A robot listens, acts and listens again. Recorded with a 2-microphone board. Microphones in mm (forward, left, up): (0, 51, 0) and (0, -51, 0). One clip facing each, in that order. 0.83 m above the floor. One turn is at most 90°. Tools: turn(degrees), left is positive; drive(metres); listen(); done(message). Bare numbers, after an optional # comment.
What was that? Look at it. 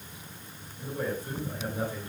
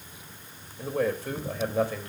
turn(-90)
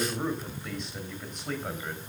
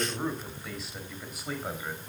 # So it is at 10° right.
turn(-10)
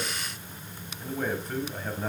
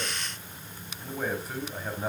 done("Found it: a man speaking, straight ahead.")